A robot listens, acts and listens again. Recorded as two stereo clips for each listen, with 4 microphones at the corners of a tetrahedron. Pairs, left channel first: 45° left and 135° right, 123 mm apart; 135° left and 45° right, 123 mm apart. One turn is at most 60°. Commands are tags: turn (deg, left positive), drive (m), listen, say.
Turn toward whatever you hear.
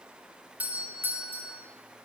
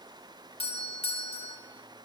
<turn deg="60"/>
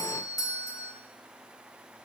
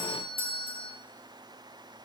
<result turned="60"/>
<turn deg="60"/>
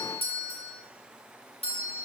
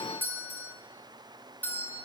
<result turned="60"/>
<turn deg="60"/>
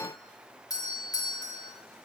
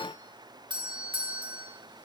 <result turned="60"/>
<say>Found it: a doorbell, straight ahead.</say>